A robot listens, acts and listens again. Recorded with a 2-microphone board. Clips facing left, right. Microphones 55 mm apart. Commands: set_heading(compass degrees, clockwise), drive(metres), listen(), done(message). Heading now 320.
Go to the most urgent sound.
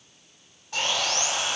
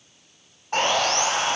listen()
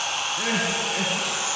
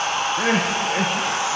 set_heading(355)
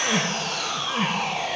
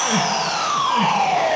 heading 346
set_heading(356)
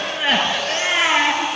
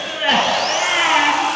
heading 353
drive(1.0)
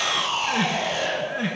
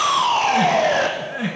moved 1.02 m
drive(1.0)
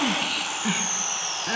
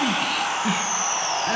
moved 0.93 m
drive(1.0)
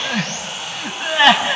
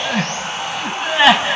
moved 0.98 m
drive(1.0)
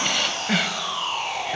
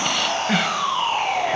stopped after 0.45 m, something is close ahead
done("I am next to the crying.")